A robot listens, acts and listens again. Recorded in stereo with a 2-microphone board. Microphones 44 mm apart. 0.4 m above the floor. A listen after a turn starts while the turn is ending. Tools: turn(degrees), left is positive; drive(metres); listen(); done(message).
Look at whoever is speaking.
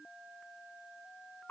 listen()
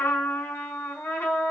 listen()
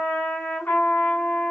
done("I can't make out anyone speaking to turn to.")